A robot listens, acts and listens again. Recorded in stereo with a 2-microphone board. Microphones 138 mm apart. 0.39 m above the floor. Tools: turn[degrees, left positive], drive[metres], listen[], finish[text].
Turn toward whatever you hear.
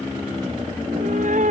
Thought: The cat meowing: about 65° right or 115° right.
Action: turn[-65]
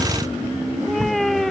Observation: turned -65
Action: finish[Found it: a cat meowing, straight ahead.]